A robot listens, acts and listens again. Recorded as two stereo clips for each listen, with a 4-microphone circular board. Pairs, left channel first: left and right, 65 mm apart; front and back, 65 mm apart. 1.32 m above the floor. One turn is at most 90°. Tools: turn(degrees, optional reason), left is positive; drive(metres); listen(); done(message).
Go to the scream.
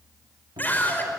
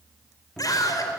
turn(degrees=25, reason="The scream: 25° left.")
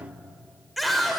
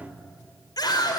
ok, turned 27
drive(metres=1.0)
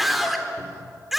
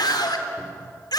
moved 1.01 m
drive(metres=1.0)
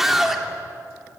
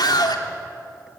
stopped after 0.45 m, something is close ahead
done("Blocked. The scream is further on, straight ahead.")